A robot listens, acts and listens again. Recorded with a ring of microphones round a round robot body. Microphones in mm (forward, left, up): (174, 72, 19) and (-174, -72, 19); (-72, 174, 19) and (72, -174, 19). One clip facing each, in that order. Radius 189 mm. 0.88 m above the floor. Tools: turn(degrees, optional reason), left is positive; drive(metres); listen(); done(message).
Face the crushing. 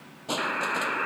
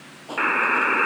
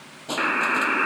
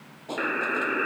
turn(degrees=60, reason="The crushing: 60° left.")
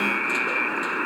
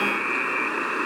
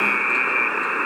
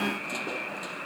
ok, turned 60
listen()
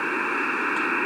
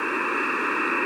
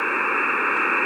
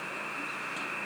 listen()
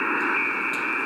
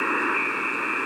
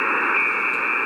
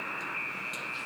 done("Facing where the crushing came from. I can't hear it now.")